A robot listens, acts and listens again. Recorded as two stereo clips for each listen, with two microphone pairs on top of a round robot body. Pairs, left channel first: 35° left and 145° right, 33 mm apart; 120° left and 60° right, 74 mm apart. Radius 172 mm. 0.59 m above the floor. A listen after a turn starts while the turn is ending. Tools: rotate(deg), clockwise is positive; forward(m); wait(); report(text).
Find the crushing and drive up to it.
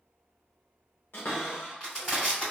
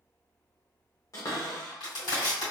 rotate(-105)
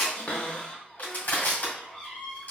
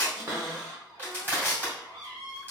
forward(1.0)
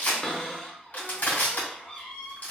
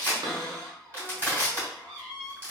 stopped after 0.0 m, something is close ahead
report("Blocked. The crushing is further on, straight ahead.")